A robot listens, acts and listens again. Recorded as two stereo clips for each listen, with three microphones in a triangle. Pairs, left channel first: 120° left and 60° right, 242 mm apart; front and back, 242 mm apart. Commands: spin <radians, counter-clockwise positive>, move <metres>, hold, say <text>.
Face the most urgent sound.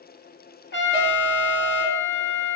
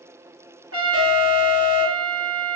spin 0.17
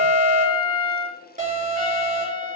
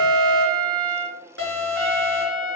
say Facing the alarm, 2 to 4 m away.